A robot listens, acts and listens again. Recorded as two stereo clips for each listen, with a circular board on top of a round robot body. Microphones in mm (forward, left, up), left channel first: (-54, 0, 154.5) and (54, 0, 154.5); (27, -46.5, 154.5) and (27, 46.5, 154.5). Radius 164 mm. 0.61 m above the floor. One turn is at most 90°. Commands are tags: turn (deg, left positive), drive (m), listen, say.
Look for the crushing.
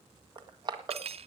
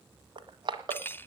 <turn deg="50"/>
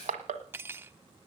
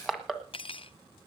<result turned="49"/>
<say>Facing the crushing.</say>